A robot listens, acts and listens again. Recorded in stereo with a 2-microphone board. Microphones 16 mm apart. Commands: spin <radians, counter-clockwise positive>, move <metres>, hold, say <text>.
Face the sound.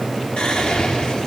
spin 1.22
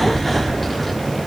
spin 0.26
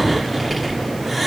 say Facing the whispering, 1 to 2 m away.